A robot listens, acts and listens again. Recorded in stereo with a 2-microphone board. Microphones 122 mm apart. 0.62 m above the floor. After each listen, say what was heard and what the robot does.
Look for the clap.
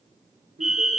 Keep listening.
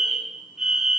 Keep listening.
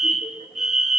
I can't make out a clap, only a fire alarm.